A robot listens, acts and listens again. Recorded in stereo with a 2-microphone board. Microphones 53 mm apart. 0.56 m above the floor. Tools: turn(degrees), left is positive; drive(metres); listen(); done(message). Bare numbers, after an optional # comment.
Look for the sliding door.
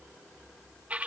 listen()
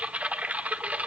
listen()
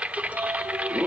turn(-90)
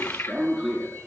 done("Facing the sliding door.")